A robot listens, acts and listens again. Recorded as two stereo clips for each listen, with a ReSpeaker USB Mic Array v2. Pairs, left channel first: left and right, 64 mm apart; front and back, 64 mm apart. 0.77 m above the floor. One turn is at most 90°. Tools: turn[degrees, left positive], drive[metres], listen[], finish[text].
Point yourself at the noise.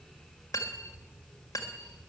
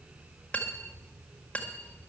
Thought: The cutlery clinking: 65° left.
Action: turn[65]
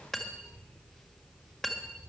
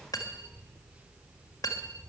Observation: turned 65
Action: finish[Found it: cutlery clinking, straight ahead, 1 to 2 m away.]